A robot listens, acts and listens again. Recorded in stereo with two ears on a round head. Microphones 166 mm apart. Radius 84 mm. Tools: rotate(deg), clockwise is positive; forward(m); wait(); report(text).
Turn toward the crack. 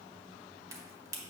rotate(15)
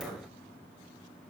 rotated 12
wait()
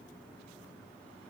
report("I heard a crack, but can't make it out now. It was about 5° right or 150° right.")